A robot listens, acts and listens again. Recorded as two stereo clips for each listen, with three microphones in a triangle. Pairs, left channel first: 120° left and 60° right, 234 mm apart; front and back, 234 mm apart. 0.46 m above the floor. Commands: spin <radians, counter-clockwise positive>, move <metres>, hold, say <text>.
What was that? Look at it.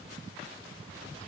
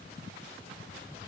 hold
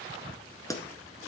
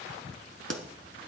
spin -2.88
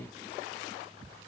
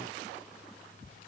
say I heard a pop from this way, but can't make it out now.